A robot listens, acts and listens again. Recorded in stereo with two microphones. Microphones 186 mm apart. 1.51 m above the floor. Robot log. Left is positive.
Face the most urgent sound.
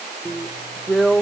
cmd idle
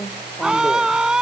cmd yaw -30
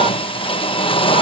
cmd idle
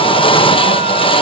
cmd idle
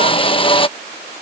end: I heard a scream, but can't make it out now. It was about 25° left or 145° right.